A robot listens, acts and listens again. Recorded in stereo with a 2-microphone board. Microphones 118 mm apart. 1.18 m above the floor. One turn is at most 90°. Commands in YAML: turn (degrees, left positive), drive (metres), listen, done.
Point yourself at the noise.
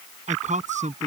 turn: -90
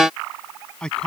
done: "Facing the man speaking."